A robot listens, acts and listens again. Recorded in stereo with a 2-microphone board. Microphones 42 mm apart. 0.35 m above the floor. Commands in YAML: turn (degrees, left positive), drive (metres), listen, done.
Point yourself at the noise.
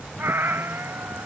turn: -60
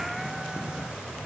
listen: true
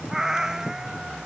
turn: -10
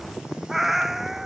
done: "Found it: a cat meowing, straight ahead."